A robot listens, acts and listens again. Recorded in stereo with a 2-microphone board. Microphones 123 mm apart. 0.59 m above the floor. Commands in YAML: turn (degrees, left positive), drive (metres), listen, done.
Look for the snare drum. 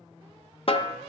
turn: 50
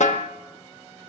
turn: 80
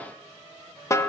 turn: 25
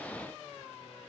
turn: 30
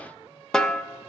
done: "Found it: a snare drum, straight ahead, under 1 m away."